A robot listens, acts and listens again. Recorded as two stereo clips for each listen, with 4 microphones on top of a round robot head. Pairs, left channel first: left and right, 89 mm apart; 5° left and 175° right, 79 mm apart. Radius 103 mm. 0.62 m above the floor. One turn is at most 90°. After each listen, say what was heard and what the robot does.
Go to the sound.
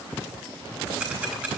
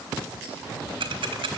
The ticking: 170° right. Turn 90° right.
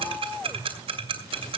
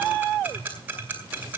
The ticking is now 105° right. Turn 90° right.
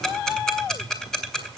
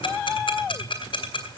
Drive 1.0 m forward.
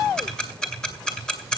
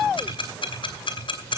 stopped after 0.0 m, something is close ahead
The ticking is now 10° left. Turn 10° left.
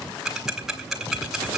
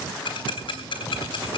Blocked. The ticking is further on, straight ahead.